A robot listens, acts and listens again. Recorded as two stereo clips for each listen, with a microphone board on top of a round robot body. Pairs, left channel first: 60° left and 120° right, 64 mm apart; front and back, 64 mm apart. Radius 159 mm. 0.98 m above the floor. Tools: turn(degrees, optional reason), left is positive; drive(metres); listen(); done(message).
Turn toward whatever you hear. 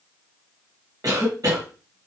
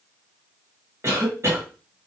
turn(degrees=-135, reason="The cough: 135° right.")
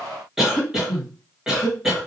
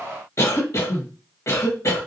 turn(degrees=-35, reason="The cough is now 35° right.")
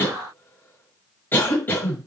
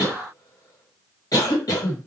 done("Facing the cough.")